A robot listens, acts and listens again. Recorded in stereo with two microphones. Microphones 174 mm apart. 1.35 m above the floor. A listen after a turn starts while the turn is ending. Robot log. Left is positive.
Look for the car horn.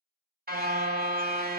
note: The car horn: about 60° right or 120° right.
cmd yaw -60
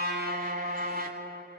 note: So it is at 60° right.
cmd yaw -60
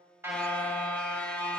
end: Found it: a car horn, straight ahead.